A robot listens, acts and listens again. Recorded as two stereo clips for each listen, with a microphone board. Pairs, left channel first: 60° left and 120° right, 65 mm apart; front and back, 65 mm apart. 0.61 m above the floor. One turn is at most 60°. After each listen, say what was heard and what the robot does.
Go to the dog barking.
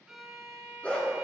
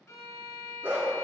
The dog barking: 130° left. Turn 60° left.
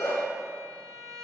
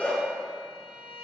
The dog barking is now 65° left. Turn 60° left.
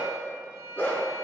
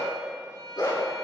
Drive 1.0 m forward.
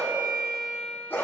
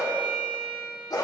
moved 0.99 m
Drive 1.0 m forward.
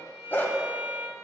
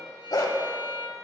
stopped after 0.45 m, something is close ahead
Arrived at the dog barking, straight ahead.